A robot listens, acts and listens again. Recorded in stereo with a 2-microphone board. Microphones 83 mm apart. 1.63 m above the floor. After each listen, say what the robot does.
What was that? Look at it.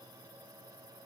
Keep listening.
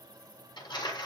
Turn 60° left.
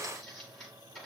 Facing the crumpling, over 4 m away.